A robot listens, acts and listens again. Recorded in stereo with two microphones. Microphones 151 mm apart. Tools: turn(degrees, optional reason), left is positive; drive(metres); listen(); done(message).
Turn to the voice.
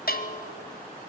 listen()
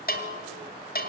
listen()
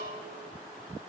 done("I can't make out anyone speaking to turn to.")